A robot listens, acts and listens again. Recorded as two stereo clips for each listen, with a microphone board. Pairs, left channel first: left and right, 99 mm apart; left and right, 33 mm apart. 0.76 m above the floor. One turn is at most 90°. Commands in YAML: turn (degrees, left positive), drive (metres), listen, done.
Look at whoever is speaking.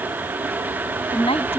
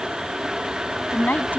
turn: 90
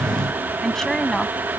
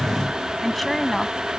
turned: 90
done: "Facing the woman speaking."